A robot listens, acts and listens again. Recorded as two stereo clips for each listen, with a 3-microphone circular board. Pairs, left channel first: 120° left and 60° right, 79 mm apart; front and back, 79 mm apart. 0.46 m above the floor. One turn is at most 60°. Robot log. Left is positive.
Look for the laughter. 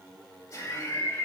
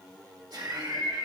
note: The laughter: 170° left.
cmd yaw +60
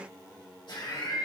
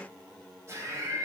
note: The laughter is now 130° left.
cmd yaw +60
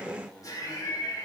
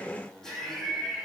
note: The laughter is now 85° left.
cmd yaw +60
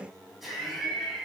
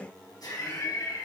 note: The laughter is now 30° left.
cmd yaw +30
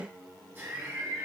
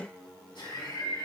end: Found it: laughter, straight ahead, 2 to 4 m away.